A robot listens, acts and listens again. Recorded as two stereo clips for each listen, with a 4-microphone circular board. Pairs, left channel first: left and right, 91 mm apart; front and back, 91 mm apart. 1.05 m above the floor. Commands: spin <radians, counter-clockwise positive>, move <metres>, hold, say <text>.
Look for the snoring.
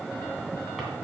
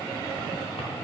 hold
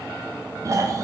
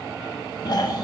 spin -0.61
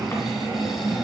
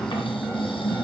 say Found it: snoring, straight ahead.